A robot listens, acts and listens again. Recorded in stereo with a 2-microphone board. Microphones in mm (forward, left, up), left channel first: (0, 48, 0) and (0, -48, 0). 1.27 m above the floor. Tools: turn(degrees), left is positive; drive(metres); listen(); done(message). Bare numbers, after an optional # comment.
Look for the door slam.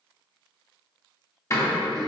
# The door slam: about 35° left or 145° left.
turn(35)
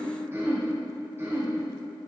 listen()
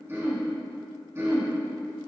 done("I heard a door slam, but can't make it out now. It was about straight ahead or 110° left.")